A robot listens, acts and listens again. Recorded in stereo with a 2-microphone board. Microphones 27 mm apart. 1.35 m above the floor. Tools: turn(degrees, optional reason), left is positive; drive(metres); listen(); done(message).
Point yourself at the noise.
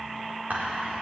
turn(degrees=-90)
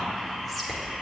done("Facing the whispering, over 4 m away.")